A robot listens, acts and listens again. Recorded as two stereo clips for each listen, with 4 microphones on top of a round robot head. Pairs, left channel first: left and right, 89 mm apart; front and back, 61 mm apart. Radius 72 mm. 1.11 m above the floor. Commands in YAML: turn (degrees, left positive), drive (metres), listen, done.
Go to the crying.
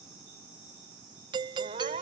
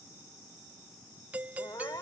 turn: -60
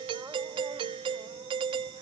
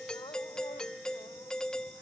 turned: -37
turn: -20
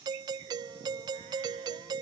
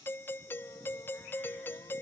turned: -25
listen: true
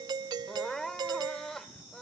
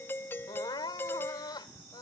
drive: 1.0
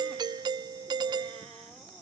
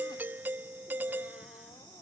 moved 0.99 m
listen: true
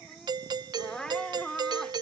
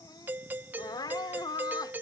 drive: 1.0
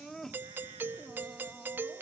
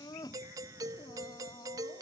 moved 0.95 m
drive: 1.0
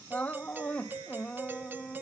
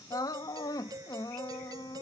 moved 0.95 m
turn: 15
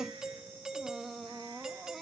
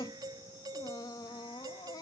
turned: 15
drive: 1.0
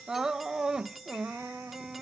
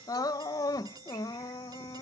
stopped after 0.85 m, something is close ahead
done: "Arrived at the crying, straight ahead."